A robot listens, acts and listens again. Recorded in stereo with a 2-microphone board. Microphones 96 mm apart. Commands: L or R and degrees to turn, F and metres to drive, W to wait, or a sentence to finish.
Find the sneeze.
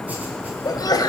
L40
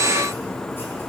W
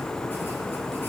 I heard a sneeze, but can't make it out now. It was about straight ahead or 100° left.